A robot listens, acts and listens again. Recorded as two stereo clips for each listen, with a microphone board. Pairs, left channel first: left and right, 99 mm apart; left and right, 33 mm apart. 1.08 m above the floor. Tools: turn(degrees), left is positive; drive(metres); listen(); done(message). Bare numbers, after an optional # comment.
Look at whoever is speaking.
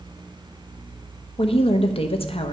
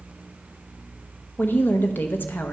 # The woman speaking: about 75° left or 105° left.
turn(75)
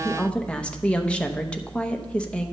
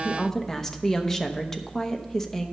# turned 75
# So it is at 10° left.
turn(10)
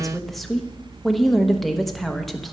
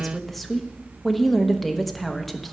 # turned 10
done("Facing the woman speaking.")